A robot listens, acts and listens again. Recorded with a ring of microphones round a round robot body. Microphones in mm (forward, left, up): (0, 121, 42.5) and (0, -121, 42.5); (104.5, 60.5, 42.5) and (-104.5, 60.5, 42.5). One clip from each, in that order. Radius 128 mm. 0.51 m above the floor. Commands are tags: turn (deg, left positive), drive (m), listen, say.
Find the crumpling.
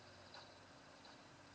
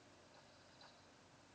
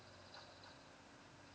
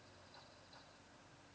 <listen/>
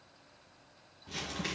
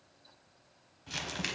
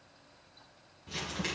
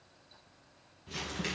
<turn deg="-90"/>
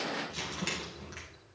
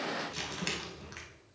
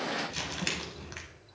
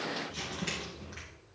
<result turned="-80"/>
<turn deg="-10"/>
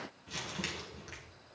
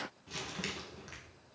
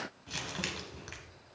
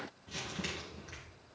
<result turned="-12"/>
<say>Facing the crumpling.</say>